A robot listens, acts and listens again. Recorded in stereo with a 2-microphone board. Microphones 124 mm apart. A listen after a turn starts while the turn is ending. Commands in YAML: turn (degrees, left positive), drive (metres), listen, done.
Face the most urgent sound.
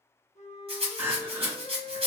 turn: -15
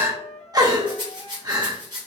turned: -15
turn: -150
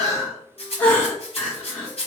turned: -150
turn: 10
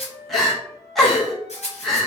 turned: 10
done: "Facing the crying, under 1 m away."